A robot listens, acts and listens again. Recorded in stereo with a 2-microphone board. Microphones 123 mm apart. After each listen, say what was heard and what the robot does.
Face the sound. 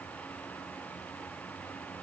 Keep listening.
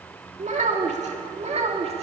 The child speaking: about 60° right or 120° right. Turn 60° right.
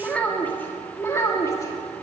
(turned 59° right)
So it is at 25° left. Turn 25° left.
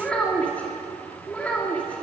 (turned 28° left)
The child speaking is now 10° left. Turn 10° left.
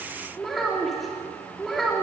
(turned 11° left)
Found it: a child speaking, straight ahead.